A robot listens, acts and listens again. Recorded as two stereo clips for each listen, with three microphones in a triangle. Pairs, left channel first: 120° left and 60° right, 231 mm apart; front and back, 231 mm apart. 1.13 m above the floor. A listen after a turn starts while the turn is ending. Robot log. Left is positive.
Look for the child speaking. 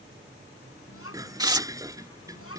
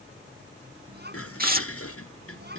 note: The child speaking: 135° left.
cmd yaw +135
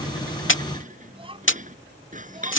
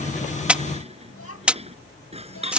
end: Found it: a child speaking, straight ahead.